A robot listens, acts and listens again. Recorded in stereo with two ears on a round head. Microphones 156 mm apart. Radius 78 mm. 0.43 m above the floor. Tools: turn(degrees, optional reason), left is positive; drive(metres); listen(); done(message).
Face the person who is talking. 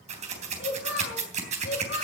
turn(degrees=75, reason="The child speaking: about 75° left or 105° left.")
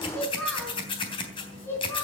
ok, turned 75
turn(degrees=15, reason="So it is at 15° left.")
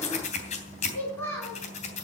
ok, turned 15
turn(degrees=15, reason="The child speaking is now 15° left.")
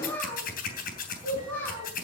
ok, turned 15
turn(degrees=10, reason="The child speaking is now 10° left.")
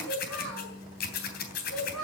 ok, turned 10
done("Facing the child speaking.")